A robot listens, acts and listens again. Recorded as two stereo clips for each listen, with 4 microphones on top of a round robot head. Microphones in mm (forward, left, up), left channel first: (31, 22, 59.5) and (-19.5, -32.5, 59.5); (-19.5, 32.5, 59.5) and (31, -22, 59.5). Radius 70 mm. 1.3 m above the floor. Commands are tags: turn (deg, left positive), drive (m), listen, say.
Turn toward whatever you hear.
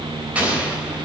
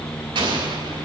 <turn deg="-65"/>
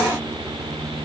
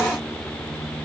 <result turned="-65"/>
<say>I heard an explosion from this way, but can't make it out now.</say>